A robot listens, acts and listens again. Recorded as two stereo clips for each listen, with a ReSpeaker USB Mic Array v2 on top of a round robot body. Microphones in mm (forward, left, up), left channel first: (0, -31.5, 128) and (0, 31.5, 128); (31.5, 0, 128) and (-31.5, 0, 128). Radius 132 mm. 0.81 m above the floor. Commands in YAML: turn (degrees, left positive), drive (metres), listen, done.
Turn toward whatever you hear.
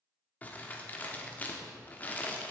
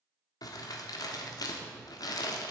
turn: -20
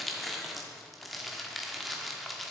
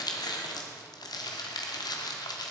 done: "Facing the crumpling, 1 to 2 m away."